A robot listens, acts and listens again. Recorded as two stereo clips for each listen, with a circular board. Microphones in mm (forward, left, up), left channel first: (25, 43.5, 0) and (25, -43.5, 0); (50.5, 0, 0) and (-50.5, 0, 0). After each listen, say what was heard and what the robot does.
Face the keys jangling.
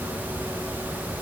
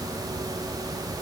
Keep listening.
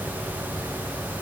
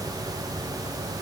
Keep listening.
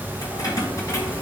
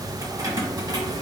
The keys jangling: 140° left. Turn 140° left.
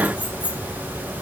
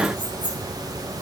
The keys jangling is now 30° left. Turn 30° left.
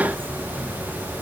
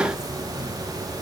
Keep listening.
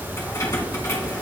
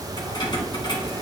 The keys jangling is now 40° left. Turn 40° left.
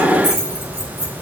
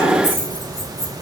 Found it: keys jangling, straight ahead.